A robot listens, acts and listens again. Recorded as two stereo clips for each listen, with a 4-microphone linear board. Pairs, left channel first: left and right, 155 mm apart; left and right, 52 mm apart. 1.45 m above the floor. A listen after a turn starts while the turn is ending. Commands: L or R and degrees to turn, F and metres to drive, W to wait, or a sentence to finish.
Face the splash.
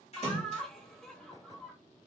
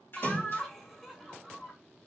L50
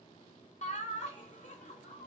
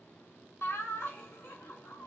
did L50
W
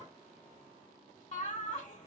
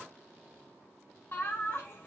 I heard a splash, but can't make it out now. It was about straight ahead or 80° left.